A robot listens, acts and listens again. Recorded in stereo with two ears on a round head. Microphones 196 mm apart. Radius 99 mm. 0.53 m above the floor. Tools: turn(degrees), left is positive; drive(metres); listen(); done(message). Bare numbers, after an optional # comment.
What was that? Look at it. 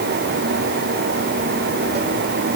listen()
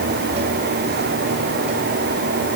listen()
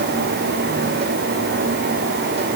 done("I can't make out anything.")